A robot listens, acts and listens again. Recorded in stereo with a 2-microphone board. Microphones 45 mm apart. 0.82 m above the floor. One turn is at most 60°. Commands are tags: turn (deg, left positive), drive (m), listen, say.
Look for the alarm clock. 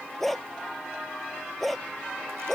<listen/>
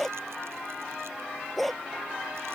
<listen/>
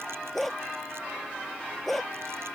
<say>I can't make out an alarm clock to turn to.</say>